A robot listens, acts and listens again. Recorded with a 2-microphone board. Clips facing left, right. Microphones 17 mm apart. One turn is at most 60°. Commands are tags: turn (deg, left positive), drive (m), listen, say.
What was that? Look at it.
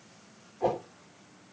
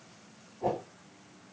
<turn deg="60"/>
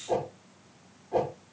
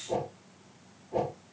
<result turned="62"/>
<turn deg="40"/>
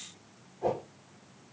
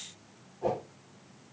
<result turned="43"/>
<say>Facing the whoosh.</say>